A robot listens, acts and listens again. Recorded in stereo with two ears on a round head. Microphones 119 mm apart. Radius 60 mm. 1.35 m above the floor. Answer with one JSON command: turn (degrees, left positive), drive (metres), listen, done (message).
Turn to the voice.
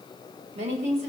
{"turn": -55}
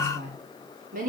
{"turn": -60}
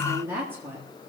{"turn": -15}
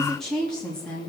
{"turn": 10}
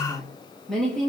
{"done": "Facing the woman speaking, 2 to 4 m away."}